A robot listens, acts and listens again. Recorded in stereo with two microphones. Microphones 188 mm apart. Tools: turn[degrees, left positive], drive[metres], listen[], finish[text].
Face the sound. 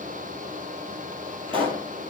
Thought: The pop: about 30° right or 150° right.
Action: turn[-30]
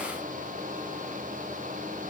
Action: listen[]
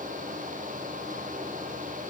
Action: finish[I heard a pop, but can't make it out now. It was about straight ahead or 120° right.]